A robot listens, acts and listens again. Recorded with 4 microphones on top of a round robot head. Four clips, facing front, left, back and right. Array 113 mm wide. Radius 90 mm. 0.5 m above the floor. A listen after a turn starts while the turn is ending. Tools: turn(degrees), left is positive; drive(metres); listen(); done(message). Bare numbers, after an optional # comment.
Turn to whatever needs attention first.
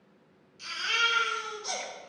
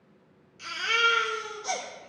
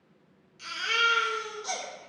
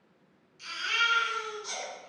# The baby crying: 125° left.
turn(125)
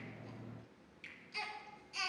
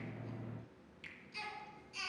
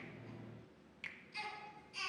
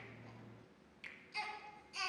# The baby crying is now 15° right.
turn(-15)
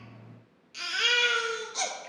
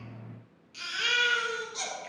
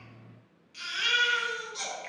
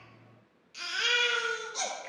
done("Found it: a baby crying, straight ahead.")